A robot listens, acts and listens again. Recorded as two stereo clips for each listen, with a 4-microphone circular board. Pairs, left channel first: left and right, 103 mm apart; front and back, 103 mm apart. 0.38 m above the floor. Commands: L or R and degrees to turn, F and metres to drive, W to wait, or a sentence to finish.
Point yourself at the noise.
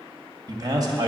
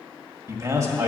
R130
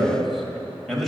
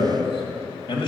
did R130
Facing the man speaking.